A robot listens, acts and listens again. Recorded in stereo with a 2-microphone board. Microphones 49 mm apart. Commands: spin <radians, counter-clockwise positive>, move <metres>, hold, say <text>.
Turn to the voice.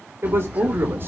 spin -0.87
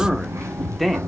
say Found it: a man speaking, straight ahead, 1 to 2 m away.